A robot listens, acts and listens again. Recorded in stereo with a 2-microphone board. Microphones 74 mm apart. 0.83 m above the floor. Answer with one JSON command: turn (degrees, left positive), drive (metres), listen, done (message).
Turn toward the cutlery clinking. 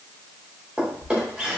{"listen": true}
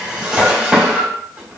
{"listen": true}
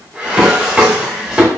{"done": "I can't make out cutlery clinking, only a drawer."}